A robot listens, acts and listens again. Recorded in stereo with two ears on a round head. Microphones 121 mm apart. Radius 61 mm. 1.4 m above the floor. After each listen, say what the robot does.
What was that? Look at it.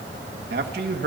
Turn 90° right.
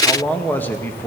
Turn 15° left.
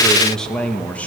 Turn 10° left.
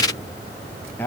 Turn 15° left.
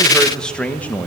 Turn 15° left.
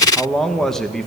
Facing the man speaking, 1 to 2 m away.